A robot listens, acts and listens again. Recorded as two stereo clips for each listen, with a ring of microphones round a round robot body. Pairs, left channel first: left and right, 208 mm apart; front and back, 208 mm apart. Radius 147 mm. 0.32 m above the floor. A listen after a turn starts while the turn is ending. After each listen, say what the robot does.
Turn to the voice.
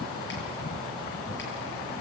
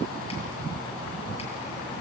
Keep listening.
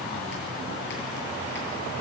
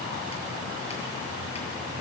Keep listening.
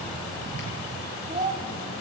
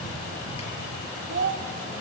Turn 155° right.
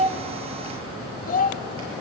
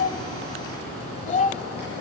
Turn 50° left.
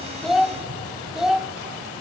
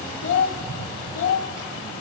Facing the child speaking, 1 to 2 m away.